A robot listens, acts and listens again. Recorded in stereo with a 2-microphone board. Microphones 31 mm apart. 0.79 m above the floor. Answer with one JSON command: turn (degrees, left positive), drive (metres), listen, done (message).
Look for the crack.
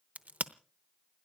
{"turn": -65}
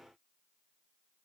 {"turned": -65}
{"listen": true}
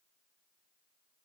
{"done": "I heard a crack, but can't make it out now. It was about straight ahead or 50° right."}